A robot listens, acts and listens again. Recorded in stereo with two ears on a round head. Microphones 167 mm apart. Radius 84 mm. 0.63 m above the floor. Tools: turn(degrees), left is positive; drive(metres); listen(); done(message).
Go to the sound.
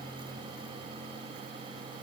listen()
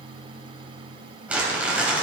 turn(degrees=-30)
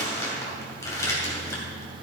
turn(degrees=20)
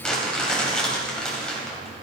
drive(metres=1.0)
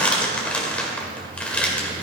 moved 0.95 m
turn(degrees=10)
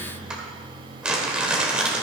drive(metres=1.0)
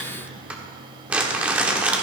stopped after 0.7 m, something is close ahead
turn(degrees=-10)
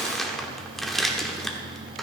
done("Arrived at the crumpling, straight ahead.")